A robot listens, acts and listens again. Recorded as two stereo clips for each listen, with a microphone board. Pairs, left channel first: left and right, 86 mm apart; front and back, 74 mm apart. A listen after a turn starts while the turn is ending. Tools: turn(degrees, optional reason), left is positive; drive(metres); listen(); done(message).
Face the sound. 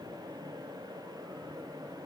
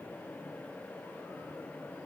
listen()
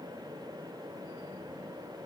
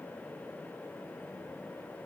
listen()
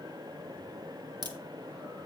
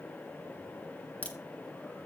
turn(degrees=-65, reason="The crack: 65° right.")
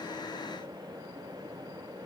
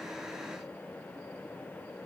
done("I heard a crack from this way, but can't make it out now.")